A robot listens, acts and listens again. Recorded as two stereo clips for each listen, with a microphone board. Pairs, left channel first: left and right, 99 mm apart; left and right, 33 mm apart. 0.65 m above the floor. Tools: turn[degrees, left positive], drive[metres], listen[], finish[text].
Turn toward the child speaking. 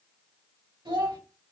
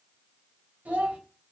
Thought: The child speaking: about 60° right or 120° right.
Action: turn[-60]
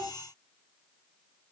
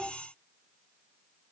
Thought: So it is at 55° right.
Action: turn[-55]
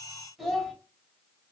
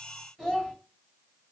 Action: finish[Facing the child speaking.]